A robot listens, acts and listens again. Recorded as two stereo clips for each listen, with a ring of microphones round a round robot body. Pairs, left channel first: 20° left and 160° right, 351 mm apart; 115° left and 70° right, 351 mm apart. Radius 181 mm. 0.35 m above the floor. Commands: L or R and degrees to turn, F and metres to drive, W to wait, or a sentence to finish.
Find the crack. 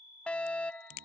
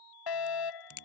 L60
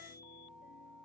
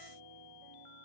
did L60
Facing where the crack came from. I can't hear it now.